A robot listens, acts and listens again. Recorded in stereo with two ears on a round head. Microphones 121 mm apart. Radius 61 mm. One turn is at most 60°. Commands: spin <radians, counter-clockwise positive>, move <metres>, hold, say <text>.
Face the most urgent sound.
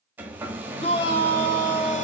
spin 0.79
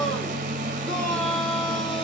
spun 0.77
say Found it: a shout, straight ahead.